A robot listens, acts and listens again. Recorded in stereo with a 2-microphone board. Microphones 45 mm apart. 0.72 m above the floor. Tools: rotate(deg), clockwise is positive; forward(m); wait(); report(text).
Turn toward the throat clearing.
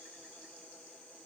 wait()
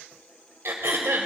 rotate(70)
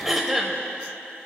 report("Facing the throat clearing.")